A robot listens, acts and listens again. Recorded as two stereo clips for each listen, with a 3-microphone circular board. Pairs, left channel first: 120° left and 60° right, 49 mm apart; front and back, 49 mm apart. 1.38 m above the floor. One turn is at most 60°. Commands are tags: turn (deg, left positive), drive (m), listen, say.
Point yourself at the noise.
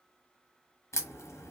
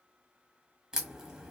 <turn deg="60"/>
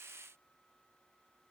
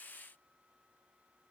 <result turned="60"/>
<turn deg="40"/>
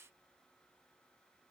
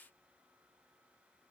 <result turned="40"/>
<say>Facing where the crack came from. I can't hear it now.</say>